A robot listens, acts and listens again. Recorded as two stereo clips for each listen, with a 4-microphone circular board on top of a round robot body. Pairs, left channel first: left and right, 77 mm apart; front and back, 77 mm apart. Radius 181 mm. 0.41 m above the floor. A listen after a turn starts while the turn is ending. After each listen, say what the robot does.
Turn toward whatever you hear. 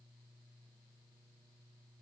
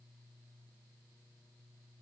Keep listening.
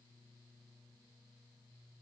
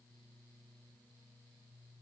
Keep listening.
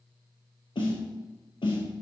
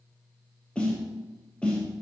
Turn 75° left.
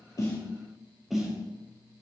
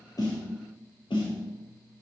Facing the snare drum.